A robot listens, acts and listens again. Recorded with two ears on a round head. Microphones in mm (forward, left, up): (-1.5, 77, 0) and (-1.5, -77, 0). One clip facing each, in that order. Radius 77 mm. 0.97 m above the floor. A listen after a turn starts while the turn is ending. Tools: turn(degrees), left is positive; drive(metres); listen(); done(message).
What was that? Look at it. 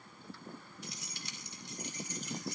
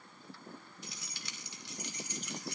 turn(degrees=-55)
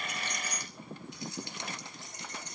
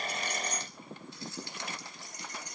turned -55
turn(degrees=20)
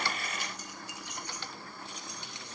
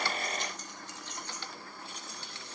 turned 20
turn(degrees=15)
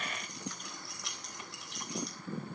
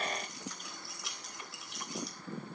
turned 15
done("Facing the keys jangling.")